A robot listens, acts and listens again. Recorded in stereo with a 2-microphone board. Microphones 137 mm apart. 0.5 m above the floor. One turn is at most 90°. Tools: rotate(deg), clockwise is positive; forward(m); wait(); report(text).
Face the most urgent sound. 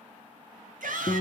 rotate(90)
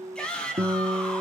report("Found it: a shout, straight ahead.")